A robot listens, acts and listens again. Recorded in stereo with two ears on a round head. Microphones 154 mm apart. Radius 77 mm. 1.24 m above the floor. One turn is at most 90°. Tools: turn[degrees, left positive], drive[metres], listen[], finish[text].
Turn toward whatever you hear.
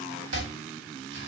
Action: turn[-90]
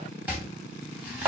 Thought: So it is at 10° right.
Action: turn[-10]
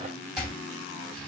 Action: finish[Facing the chopping, 2 to 4 m away.]